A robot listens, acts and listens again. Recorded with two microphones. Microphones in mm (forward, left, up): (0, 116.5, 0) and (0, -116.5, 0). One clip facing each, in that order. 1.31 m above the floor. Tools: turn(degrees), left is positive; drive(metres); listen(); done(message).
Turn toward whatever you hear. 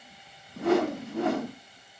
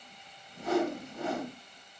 turn(degrees=70)
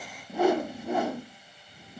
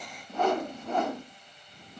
turn(degrees=10)
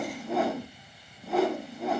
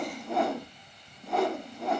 done("Facing the whoosh, under 1 m away.")